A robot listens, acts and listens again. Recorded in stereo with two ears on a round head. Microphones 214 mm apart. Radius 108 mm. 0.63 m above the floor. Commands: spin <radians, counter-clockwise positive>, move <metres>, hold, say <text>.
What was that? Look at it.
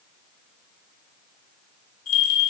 spin 1.13
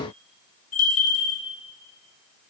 spin 0.61
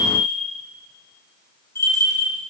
spin 0.17
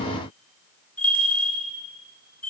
say Facing the bell.